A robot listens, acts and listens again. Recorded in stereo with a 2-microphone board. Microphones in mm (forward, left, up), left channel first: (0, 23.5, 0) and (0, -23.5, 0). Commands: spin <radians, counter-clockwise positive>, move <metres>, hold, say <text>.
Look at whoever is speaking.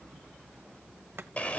hold
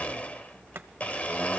hold
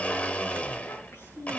spin 1.57
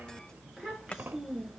say Facing the child speaking, over 4 m away.